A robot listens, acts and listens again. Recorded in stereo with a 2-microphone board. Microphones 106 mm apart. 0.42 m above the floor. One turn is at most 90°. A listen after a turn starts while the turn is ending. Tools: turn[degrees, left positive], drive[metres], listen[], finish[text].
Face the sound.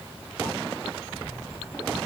Action: listen[]
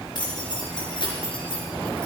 Thought: The keys jangling: about 50° left or 130° left.
Action: turn[50]
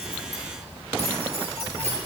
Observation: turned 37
Action: listen[]
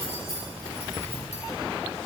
Thought: So it is at 95° left.
Action: turn[90]
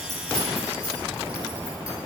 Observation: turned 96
Action: listen[]
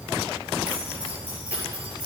Thought: The keys jangling is now 10° right.
Action: turn[-10]
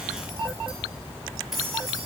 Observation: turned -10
Action: listen[]
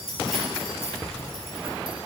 Action: finish[Facing the keys jangling.]